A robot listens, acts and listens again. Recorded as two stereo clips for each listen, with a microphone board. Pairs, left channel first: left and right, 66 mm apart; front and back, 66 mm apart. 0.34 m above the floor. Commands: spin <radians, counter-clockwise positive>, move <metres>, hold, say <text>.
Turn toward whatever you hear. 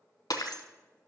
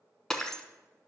spin 1.40
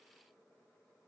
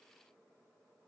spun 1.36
say I heard breaking glass from this way, but can't make it out now.